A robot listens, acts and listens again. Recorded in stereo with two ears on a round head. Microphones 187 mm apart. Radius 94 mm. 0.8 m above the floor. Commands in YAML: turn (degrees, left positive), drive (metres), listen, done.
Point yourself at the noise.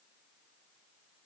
listen: true
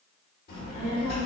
turn: 50
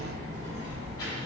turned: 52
turn: 20
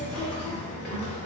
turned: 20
turn: 15
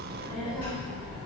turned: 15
turn: 10
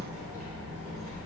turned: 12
done: "Facing the child speaking."